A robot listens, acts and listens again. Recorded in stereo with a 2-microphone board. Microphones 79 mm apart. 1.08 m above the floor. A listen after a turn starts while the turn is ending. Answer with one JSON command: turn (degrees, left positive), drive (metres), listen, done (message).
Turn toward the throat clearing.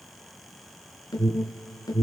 {"listen": true}
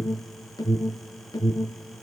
{"listen": true}
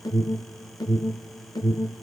{"done": "I can't make out throat clearing to turn to."}